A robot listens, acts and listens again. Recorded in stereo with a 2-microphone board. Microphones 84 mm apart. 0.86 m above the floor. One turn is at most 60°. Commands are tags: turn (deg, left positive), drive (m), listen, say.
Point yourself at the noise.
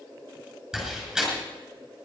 <turn deg="-30"/>
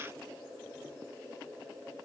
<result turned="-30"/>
<listen/>
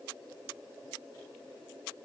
<say>I heard a door slam, but can't make it out now. It was about 25° left or 145° right.</say>